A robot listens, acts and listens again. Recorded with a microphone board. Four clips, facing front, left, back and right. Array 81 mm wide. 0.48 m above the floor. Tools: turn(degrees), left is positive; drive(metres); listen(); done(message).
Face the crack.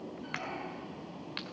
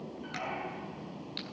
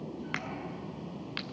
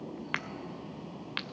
turn(degrees=-100)
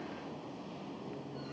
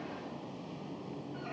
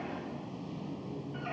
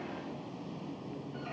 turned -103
done("I heard a crack from this way, but can't make it out now.")